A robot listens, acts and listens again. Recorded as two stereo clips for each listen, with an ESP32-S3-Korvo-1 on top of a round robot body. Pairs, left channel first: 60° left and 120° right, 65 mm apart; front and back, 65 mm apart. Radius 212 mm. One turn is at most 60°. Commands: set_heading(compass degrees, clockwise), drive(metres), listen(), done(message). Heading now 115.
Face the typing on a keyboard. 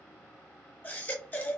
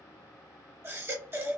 listen()
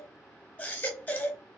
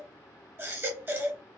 listen()
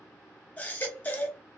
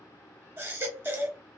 done("I can't make out typing on a keyboard to turn to.")